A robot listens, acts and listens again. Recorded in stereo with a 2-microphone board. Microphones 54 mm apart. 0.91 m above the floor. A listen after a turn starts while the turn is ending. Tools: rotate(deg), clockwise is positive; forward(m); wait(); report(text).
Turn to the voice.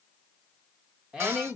rotate(20)
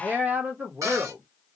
rotate(140)
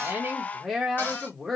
report("Facing the woman speaking.")